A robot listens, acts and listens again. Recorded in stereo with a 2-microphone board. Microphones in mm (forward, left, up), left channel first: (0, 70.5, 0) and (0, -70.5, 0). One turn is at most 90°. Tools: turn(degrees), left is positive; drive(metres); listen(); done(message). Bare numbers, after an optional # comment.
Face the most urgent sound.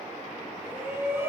# The shout: about 15° right or 165° right.
turn(-15)
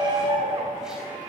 # So it is at 150° right.
turn(-90)
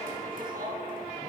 # The shout is now 95° right.
turn(-90)
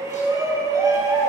# The shout is now 25° right.
turn(-25)
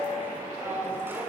# The shout is now 15° right.
turn(-15)
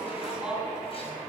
done("Found it: a shout, straight ahead, over 4 m away.")